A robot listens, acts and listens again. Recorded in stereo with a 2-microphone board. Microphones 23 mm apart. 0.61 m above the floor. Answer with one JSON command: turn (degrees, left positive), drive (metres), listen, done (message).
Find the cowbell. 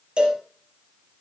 {"turn": -50}
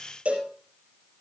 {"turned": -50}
{"turn": -80}
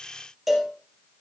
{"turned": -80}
{"done": "Found it: a cowbell, straight ahead, 2 to 4 m away."}